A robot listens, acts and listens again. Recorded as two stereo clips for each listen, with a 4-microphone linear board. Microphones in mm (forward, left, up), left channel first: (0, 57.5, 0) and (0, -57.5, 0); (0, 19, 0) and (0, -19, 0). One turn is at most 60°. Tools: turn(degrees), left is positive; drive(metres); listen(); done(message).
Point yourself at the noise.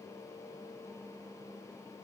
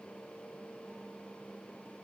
listen()
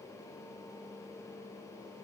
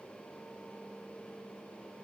listen()
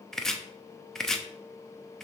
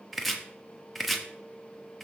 turn(degrees=30)
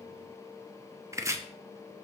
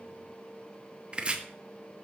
turn(degrees=-25)
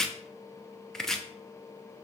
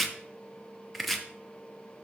done("Facing the chopping.")